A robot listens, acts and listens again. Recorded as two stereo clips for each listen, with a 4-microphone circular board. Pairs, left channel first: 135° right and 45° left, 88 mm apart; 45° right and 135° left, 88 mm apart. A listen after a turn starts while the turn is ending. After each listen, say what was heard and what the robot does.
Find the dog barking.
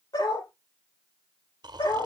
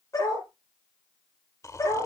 The dog barking: 95° right. Turn 95° right.
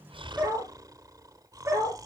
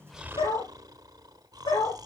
The dog barking is now 10° right. Turn 10° right.
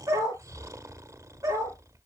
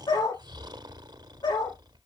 Found it: a dog barking, straight ahead.